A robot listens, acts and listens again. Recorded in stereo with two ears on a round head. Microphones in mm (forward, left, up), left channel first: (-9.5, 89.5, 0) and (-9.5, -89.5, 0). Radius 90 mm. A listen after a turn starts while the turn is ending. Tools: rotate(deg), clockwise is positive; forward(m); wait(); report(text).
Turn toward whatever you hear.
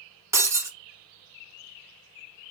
rotate(15)
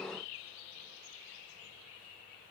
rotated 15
wait()
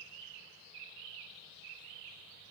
report("I heard breaking glass, but can't make it out now. It was about straight ahead or 150° right.")